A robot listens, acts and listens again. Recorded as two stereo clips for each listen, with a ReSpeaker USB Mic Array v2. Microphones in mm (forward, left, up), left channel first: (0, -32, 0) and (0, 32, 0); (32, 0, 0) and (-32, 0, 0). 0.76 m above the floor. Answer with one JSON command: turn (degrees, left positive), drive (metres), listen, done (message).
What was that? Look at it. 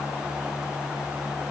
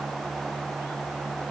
{"listen": true}
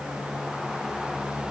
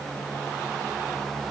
{"listen": true}
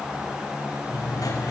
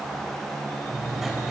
{"turn": -95}
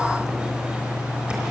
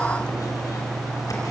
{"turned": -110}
{"turn": 15}
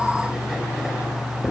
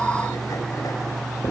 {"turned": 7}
{"done": "Found it: writing, straight ahead, over 4 m away."}